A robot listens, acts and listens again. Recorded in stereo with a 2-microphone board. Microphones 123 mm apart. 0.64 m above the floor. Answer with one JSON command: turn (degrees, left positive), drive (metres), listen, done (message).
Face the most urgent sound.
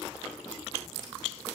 {"listen": true}
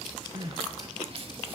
{"turn": -50}
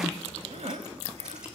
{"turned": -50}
{"turn": -75}
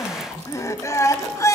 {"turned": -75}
{"turn": 30}
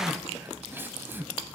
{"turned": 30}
{"turn": -20}
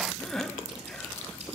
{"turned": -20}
{"done": "Facing the crying."}